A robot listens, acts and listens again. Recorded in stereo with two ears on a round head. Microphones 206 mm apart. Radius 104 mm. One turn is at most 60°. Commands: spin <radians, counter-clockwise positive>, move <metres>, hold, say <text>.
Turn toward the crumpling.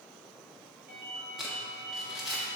spin 0.52
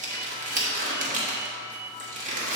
spin -0.61
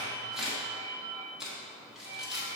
say Facing the crumpling, 1 to 2 m away.